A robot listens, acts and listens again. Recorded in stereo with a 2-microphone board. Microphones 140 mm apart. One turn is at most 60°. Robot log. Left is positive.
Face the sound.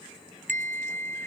note: The bell: about 65° right or 115° right.
cmd yaw -60
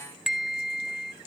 end: Found it: a bell, straight ahead.